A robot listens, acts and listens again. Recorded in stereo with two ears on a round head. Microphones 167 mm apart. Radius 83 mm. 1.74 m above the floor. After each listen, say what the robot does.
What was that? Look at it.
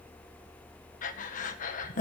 Turn 45° left.
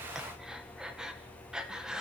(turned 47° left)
Facing the breathing.